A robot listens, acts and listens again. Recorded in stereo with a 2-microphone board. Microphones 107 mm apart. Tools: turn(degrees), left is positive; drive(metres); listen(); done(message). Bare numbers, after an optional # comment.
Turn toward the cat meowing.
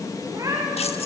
# The cat meowing: about 30° right or 150° right.
turn(-30)
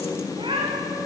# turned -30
# So it is at 130° right.
turn(-130)
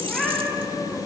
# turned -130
done("Found it: a cat meowing, straight ahead, over 4 m away.")